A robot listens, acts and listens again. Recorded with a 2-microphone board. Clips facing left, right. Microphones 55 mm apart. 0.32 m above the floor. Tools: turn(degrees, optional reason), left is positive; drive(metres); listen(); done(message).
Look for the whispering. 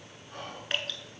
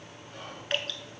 turn(degrees=50, reason="The whispering: about 50° left or 130° left.")
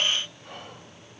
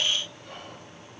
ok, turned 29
turn(degrees=30, reason="So it is at 30° left.")
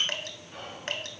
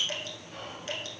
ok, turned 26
done("Found it: whispering, straight ahead.")